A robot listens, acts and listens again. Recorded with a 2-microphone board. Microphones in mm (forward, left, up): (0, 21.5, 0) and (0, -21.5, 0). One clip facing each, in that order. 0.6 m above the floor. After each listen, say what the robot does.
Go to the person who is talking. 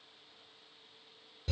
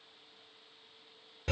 Keep listening.
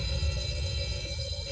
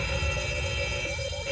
Keep listening.
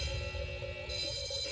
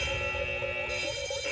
I can't make out anyone speaking, only a fire alarm.